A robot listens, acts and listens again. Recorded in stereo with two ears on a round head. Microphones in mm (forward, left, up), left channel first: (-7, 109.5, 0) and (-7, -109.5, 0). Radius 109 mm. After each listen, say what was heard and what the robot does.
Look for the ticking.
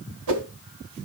Keep listening.
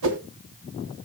Keep listening.
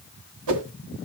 I can't make out ticking, only a whoosh.